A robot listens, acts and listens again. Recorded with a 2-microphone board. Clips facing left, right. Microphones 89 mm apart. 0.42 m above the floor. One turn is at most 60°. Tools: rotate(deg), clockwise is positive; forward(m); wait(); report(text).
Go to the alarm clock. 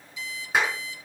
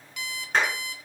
rotate(60)
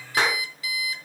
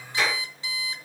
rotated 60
rotate(30)
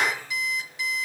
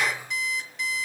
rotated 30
forward(1.0)
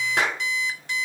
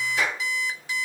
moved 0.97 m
forward(1.0)
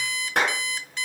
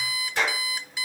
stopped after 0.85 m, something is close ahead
rotate(10)
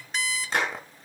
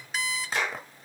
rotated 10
report("Arrived at the alarm clock, straight ahead.")